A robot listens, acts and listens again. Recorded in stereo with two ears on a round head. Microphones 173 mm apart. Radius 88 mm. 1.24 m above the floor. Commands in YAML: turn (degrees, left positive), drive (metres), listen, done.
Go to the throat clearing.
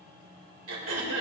turn: -70
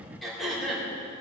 drive: 1.0
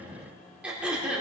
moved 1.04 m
drive: 1.0
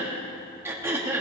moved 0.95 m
turn: -15
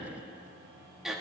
drive: 1.0
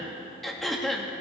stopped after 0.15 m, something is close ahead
done: "Arrived at the throat clearing, straight ahead."